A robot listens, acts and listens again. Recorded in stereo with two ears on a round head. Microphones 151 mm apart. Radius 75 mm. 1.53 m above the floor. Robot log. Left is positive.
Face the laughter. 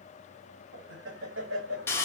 cmd yaw -90
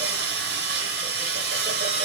cmd idle
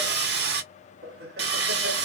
note: The laughter is now 65° right.
cmd yaw -65
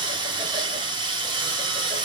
cmd idle
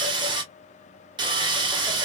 cmd idle
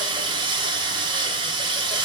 end: I heard laughter from this way, but can't make it out now.